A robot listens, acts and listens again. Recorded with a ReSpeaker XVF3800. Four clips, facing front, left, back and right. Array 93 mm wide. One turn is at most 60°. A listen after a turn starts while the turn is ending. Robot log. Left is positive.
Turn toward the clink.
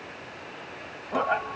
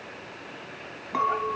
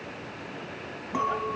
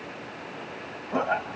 note: The clink: 105° left.
cmd yaw +60
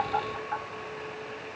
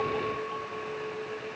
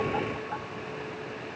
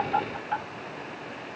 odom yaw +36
note: Nothing new. It was at 70° left.
cmd yaw +60
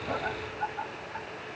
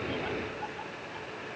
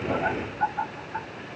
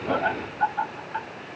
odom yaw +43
note: Nothing new. It was at 25° left.
cmd yaw +25
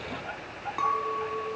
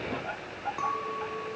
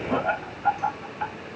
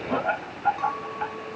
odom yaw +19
note: The clink is now 10° left.
cmd yaw +10
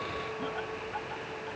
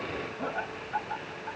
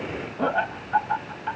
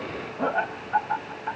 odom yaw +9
cmd idle
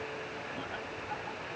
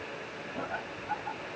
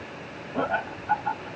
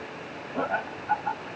cmd idle
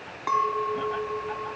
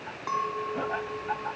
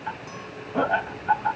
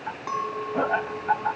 end: Found it: a clink, straight ahead.